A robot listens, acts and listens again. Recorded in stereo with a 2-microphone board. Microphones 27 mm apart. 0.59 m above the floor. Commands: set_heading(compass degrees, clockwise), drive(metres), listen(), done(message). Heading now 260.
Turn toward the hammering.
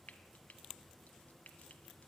listen()
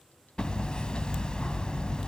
set_heading(225)
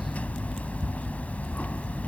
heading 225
set_heading(115)
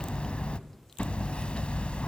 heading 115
set_heading(70)
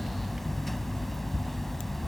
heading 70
done("Facing the hammering.")